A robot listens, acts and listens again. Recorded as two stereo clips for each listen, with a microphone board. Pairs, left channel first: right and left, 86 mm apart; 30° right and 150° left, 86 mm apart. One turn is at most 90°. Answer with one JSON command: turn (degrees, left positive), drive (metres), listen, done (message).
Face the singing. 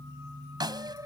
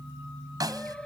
{"turn": 50}
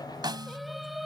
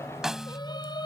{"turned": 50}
{"done": "Facing the singing."}